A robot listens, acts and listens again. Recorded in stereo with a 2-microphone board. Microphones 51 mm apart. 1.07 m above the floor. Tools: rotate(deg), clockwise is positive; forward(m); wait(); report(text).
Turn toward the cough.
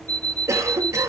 rotate(90)
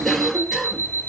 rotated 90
report("Found it: a cough, straight ahead, 1 to 2 m away.")